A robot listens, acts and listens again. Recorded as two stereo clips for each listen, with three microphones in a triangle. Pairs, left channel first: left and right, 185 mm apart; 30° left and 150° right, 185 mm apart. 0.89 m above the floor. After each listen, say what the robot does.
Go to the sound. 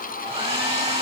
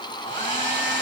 Turn 35° right.
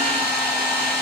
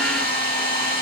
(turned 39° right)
Drive 1.0 m forward.
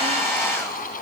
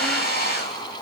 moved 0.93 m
Turn 10° left.
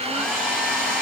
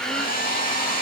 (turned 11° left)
Drive 1.0 m forward.
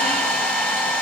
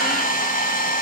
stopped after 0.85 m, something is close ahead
Arrived at the hair dryer, straight ahead.